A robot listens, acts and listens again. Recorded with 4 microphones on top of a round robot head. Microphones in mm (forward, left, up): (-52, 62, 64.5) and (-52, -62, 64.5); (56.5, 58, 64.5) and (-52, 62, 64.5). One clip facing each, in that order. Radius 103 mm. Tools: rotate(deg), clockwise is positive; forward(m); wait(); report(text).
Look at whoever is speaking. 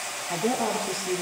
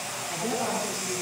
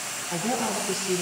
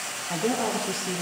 rotate(-140)
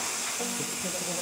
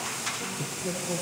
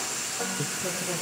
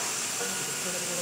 wait()
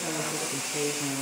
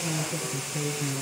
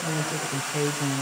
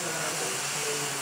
rotate(-30)
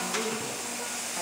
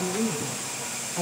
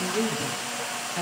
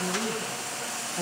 report("Found it: a woman speaking, straight ahead, over 4 m away.")